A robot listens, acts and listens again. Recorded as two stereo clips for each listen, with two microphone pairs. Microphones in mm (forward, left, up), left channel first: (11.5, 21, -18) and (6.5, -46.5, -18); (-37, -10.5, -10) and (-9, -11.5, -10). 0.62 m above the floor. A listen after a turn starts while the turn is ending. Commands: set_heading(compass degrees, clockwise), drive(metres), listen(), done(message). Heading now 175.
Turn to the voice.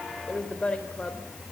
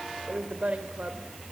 set_heading(165)
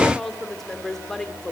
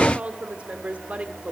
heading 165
done("Facing the woman speaking.")